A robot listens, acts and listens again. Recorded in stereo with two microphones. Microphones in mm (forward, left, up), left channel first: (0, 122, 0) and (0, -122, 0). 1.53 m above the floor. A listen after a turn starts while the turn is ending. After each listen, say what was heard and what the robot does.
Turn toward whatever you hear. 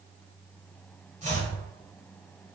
The chopping: about 30° right or 150° right. Turn 30° right.
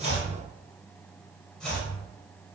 Found it: chopping, straight ahead, 1 to 2 m away.